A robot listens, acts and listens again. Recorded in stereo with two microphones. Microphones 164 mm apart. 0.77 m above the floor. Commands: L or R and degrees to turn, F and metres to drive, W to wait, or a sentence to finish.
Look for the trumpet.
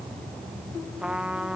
R30
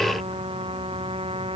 R145
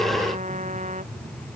R50
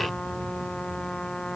Facing the trumpet.